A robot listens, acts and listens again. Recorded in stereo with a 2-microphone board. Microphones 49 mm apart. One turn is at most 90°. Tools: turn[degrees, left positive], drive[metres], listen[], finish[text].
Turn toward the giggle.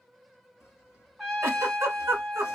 Thought: The giggle: about 65° right or 115° right.
Action: turn[-65]
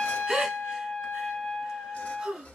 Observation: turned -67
Thought: So it is at 15° right.
Action: turn[-15]
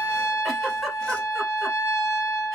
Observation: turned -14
Action: finish[Facing the giggle.]